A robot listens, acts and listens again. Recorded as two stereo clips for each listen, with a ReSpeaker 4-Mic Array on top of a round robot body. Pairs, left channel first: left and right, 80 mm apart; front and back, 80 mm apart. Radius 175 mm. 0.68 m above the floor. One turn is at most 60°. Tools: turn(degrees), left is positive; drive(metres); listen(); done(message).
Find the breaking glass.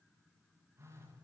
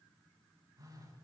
listen()
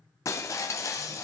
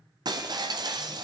turn(degrees=60)
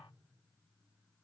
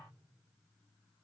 turn(degrees=60)
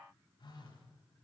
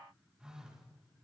turn(degrees=25)
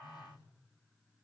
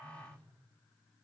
done("Facing where the breaking glass came from. I can't hear it now.")